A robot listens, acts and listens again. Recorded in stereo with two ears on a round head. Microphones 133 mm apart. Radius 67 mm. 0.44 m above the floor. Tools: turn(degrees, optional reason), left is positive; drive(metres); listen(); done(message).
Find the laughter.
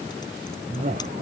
turn(degrees=-50, reason="The laughter: about 50° right or 130° right.")
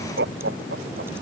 turn(degrees=-80, reason="So it is at 80° right.")
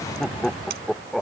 done("Facing the laughter.")